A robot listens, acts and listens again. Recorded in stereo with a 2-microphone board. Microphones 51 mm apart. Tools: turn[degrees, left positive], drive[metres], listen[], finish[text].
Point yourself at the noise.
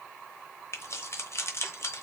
Thought: The keys jangling: about 60° left or 120° left.
Action: turn[60]
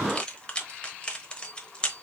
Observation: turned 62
Thought: So it is at 20° left.
Action: turn[20]
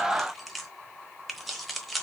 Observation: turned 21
Action: finish[Facing the keys jangling, 1 to 2 m away.]